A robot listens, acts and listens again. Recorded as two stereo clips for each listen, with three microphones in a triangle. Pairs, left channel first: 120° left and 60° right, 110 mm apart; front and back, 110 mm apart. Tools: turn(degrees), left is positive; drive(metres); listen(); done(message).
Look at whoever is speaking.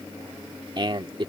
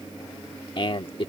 turn(degrees=-25)
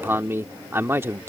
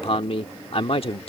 done("Found it: a man speaking, straight ahead.")